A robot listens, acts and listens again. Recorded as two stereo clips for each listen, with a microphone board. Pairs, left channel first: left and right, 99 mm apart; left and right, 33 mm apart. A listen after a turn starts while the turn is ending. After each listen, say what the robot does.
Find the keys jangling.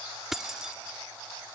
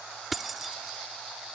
Turn 30° right.
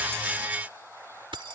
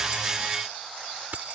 Turn 125° right.
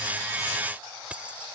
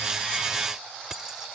Turn 15° right.
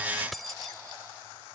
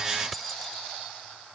Facing the keys jangling.